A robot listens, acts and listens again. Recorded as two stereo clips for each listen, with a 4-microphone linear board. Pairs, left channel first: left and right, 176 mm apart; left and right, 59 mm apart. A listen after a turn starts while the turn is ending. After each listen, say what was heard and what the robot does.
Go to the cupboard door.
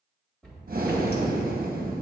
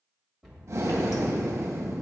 Turn 30° left.
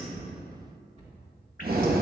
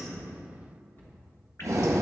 So it is at 145° left. Turn 145° left.
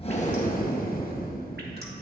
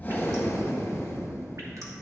Keep listening.
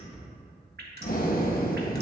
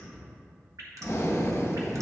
Drive 1.0 m forward.
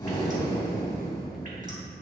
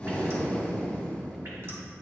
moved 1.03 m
Keep listening.
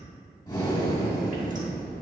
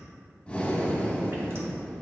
Keep listening.
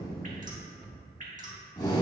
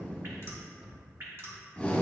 Drive 1.0 m forward.
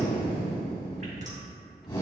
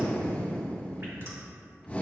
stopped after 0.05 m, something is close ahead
Keep listening.
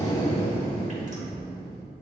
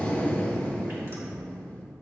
Keep listening.
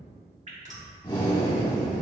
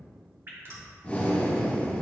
I heard a cupboard door from this way, but can't make it out now. I did not reach it.